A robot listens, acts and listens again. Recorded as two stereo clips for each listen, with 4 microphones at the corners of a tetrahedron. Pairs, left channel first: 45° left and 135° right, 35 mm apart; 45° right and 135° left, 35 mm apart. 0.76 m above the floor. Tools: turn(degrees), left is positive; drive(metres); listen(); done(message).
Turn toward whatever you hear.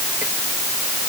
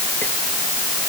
listen()
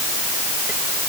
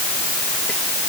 listen()
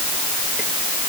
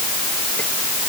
done("I can't make out anything to turn to.")